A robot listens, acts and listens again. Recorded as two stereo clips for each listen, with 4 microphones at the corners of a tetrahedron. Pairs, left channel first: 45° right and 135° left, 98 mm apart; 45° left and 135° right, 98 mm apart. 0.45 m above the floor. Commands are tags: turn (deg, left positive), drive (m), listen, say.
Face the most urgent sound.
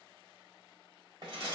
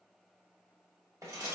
<listen/>
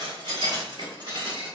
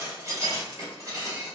<listen/>
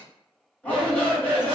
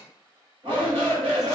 <turn deg="-120"/>
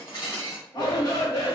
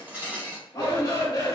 <say>Facing the shout, 1 to 2 m away.</say>